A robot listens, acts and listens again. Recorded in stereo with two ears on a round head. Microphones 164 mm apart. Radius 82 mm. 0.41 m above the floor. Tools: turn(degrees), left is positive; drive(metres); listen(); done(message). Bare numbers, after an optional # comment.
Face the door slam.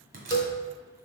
# The door slam: about 50° right or 130° right.
turn(-50)
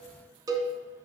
listen()
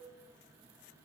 done("I heard a door slam, but can't make it out now. It was about straight ahead or 80° right.")